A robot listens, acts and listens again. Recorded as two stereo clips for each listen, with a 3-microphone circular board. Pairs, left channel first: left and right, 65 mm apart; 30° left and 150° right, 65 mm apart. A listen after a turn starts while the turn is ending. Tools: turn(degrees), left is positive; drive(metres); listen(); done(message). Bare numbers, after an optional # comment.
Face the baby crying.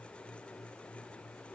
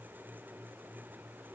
listen()
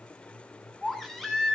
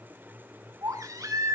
# The baby crying: straight behind.
turn(180)
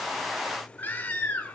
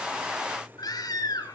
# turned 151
# The baby crying is now 30° left.
turn(30)
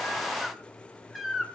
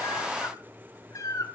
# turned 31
done("Facing the baby crying, 2 to 4 m away.")